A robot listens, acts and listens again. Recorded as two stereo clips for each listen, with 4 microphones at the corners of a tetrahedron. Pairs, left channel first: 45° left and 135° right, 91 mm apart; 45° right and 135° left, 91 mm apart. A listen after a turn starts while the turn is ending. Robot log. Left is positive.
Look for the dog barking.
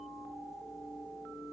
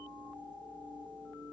cmd idle
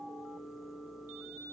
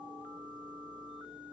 cmd idle
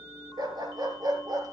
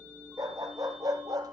note: The dog barking: straight behind.
cmd yaw +180
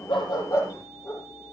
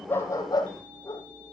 end: Facing the dog barking.